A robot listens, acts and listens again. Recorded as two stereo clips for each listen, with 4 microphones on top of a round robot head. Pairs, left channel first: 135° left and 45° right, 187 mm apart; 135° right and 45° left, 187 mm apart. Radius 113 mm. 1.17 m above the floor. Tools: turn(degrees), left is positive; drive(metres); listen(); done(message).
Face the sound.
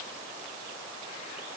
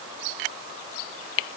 listen()
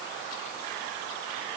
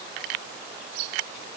listen()
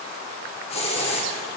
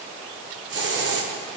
turn(degrees=75)
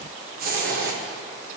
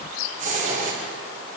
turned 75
done("Found it: a hiss, straight ahead.")